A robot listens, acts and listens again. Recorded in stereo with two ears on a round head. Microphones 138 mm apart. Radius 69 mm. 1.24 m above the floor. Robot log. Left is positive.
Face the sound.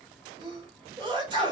note: The sneeze: about 30° right or 150° right.
cmd yaw -30
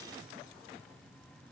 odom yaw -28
cmd idle
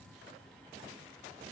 end: I heard a sneeze, but can't make it out now. It was about 5° right or 120° right.